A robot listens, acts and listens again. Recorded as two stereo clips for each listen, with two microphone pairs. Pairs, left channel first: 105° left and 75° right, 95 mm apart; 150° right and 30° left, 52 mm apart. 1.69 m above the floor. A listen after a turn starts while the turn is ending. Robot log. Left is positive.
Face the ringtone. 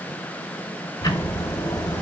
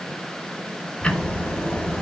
cmd idle
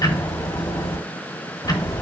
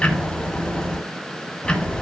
cmd idle
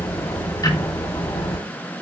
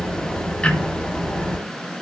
end: I can't make out a ringtone to turn to.